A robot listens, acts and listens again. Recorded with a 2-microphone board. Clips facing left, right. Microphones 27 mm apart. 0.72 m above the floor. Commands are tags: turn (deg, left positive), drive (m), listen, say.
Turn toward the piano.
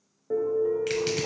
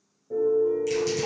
<turn deg="55"/>
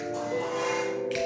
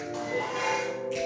<turn deg="15"/>
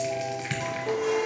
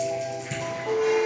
<say>Found it: a piano, straight ahead.</say>